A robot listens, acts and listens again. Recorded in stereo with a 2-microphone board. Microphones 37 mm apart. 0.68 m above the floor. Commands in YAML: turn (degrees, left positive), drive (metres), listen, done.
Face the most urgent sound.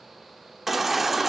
turn: -30
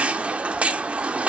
turn: -140
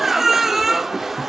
turn: -10
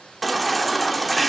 done: "Facing the baby crying."